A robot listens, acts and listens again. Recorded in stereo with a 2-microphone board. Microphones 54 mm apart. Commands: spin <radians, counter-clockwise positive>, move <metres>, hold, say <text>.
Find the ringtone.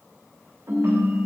spin -0.96
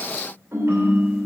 spin -1.05
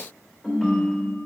say Found it: a ringtone, straight ahead.